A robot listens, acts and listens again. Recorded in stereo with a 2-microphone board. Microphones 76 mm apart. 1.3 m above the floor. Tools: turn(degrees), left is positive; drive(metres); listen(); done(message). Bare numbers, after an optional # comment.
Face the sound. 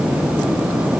listen()
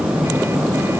listen()
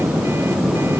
done("I can't make out anything to turn to.")